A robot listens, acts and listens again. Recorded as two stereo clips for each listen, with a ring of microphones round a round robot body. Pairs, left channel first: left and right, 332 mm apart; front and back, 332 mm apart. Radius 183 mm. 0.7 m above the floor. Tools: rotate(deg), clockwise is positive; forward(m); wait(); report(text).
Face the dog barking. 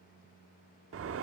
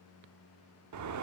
wait()
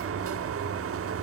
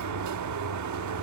wait()
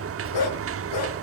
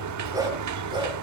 rotate(-105)
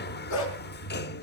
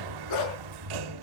rotate(-45)
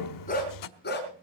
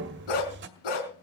rotate(-25)
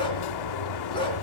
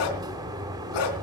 rotate(-10)
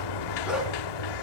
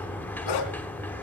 report("Facing the dog barking.")